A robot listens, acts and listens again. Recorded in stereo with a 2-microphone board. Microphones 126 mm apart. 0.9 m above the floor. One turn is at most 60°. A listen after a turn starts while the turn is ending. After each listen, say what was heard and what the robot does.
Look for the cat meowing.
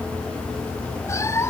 The cat meowing: about 20° left or 160° left. Turn 20° left.
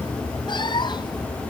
The cat meowing: about 35° left or 145° left. Turn 35° left.
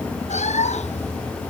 So it is at 115° left. Turn 60° left.
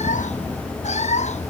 The cat meowing is now 65° left. Turn 60° left.
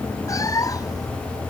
The cat meowing is now 25° left. Turn 25° left.
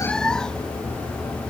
Found it: a cat meowing, straight ahead.